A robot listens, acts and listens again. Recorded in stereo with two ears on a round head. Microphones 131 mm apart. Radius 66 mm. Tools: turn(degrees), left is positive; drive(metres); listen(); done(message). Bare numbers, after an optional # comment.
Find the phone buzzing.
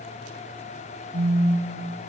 # The phone buzzing: about 55° right or 125° right.
turn(-55)
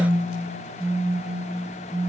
done("Found it: a phone buzzing, straight ahead, over 4 m away.")